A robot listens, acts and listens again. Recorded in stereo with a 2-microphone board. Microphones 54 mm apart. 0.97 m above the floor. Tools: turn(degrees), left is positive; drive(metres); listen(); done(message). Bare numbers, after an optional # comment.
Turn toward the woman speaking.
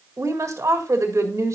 # The woman speaking: about 65° right or 115° right.
turn(-65)
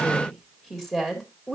done("Facing the woman speaking, 2 to 4 m away.")